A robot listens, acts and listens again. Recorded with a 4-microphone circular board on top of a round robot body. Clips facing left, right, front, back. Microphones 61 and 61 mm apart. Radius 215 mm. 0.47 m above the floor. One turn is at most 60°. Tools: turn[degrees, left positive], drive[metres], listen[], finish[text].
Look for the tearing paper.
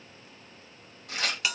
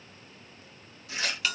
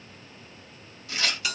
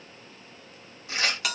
Thought: The tearing paper: 120° left.
Action: turn[60]
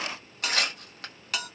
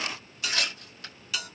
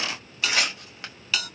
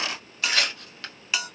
Thought: The tearing paper is now 70° left.
Action: turn[60]
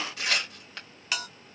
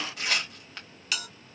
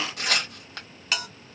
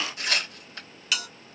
Action: finish[Facing the tearing paper.]